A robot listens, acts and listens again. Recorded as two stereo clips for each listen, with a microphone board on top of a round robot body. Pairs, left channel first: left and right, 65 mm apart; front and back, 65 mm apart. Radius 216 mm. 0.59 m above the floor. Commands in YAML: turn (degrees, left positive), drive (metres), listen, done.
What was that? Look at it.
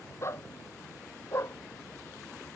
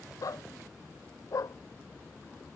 turn: 40
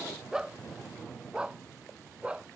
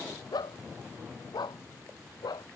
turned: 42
turn: -15
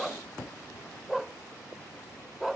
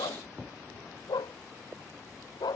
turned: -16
done: "Found it: a dog barking, straight ahead."